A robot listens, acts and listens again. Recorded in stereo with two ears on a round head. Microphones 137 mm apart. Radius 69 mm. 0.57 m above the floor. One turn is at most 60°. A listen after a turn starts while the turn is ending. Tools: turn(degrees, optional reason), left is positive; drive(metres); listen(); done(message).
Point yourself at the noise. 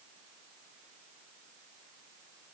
listen()
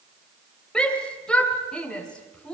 turn(degrees=30)
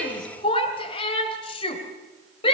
turn(degrees=60, reason="So it is at 145° left.")
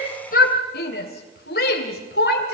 turn(degrees=60, reason="The shout is now 100° left.")
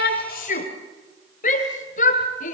turn(degrees=55, reason="The shout is now 55° left.")
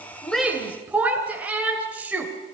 turn(degrees=-10, reason="The shout is now 10° right.")
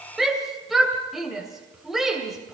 done("Found it: a shout, straight ahead, 2 to 4 m away.")